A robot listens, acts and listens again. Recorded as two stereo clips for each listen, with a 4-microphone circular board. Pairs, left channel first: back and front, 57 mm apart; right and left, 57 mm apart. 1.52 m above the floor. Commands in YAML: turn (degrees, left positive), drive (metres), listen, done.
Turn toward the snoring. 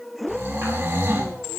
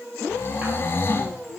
turn: -40
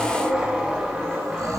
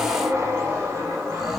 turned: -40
listen: true
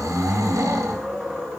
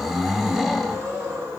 done: "Found it: snoring, straight ahead."